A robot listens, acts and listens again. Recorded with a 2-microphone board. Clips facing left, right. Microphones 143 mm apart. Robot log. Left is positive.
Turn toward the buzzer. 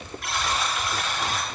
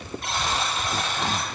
note: The buzzer: about 25° right or 155° right.
cmd yaw -25
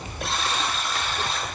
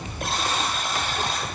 note: So it is at 130° right.
cmd yaw -130
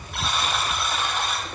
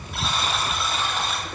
end: Facing the buzzer, under 1 m away.